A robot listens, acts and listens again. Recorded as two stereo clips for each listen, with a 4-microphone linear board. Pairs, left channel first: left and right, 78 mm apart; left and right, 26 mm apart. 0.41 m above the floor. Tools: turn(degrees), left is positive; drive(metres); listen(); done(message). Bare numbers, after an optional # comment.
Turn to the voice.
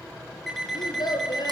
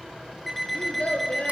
# The child speaking: about 65° left or 115° left.
turn(65)
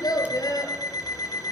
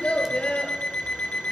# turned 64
# So it is at 50° left.
turn(50)
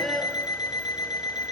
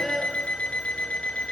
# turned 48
done("Found it: a child speaking, straight ahead.")